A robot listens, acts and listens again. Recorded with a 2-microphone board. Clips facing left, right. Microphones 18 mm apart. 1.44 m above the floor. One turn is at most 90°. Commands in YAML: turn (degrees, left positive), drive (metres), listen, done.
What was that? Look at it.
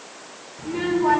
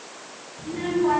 turn: 65
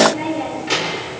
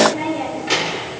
turn: -10
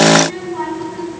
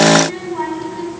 turn: -10
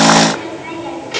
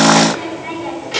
done: "Found it: a child speaking, straight ahead."